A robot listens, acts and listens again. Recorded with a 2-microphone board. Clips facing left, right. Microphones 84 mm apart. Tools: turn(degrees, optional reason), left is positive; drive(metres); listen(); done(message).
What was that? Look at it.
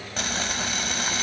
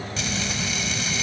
turn(degrees=45, reason="The frying: about 45° left or 135° left.")
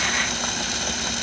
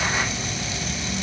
turn(degrees=85, reason="So it is at 85° left.")
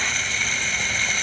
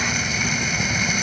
turn(degrees=-10, reason="The frying is now 10° right.")
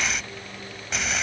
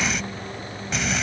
done("Facing the frying.")